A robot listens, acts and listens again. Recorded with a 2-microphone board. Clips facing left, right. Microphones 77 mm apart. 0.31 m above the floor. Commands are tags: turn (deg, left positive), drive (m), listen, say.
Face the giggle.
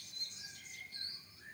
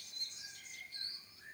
<listen/>
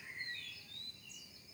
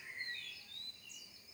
<listen/>
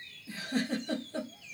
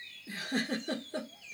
<turn deg="-55"/>
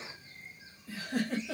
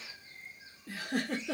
<turn deg="-70"/>
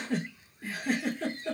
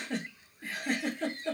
<say>Found it: a giggle, straight ahead, under 1 m away.</say>